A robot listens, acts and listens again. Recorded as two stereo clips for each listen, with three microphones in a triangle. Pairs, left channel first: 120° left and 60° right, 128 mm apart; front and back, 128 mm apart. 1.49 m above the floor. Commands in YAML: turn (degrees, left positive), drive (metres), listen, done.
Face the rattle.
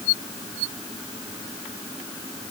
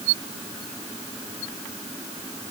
listen: true
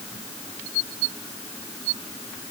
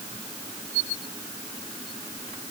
listen: true
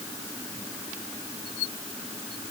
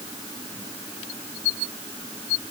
done: "I can't make out a rattle."